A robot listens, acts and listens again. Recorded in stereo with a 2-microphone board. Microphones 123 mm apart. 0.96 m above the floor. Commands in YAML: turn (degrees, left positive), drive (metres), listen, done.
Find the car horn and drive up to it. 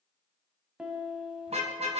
turn: -60
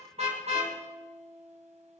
turn: -60
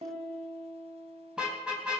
drive: 1.0
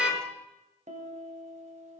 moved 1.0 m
turn: -10
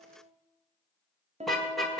drive: 1.0
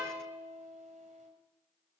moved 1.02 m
listen: true
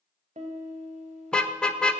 drive: 1.0
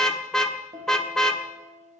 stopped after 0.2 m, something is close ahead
done: "Arrived at the car horn, straight ahead."